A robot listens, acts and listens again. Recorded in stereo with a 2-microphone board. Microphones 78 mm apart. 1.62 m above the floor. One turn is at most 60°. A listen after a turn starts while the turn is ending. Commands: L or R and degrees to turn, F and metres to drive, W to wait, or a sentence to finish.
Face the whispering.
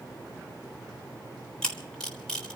W
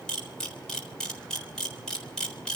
W
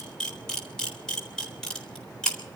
I can't make out whispering to turn to.